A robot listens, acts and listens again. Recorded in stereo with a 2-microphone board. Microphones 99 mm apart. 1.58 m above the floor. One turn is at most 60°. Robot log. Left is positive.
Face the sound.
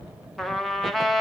cmd yaw +30
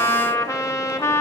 note: So it is at 145° left.
cmd yaw +60
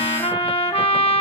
note: The trumpet is now 95° left.
cmd yaw +60
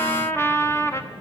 note: The trumpet is now 25° left.
cmd yaw +25
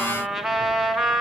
end: Found it: a trumpet, straight ahead.